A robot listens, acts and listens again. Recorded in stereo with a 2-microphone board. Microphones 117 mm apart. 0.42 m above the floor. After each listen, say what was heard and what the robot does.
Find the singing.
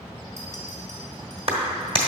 Keep listening.
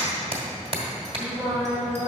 The singing: about 15° right or 165° right. Turn 15° right.
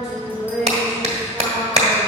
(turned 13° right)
Turn 30° right.
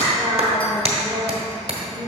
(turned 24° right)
So it is at 10° left. Turn 10° left.
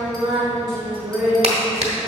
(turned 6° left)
Facing the singing.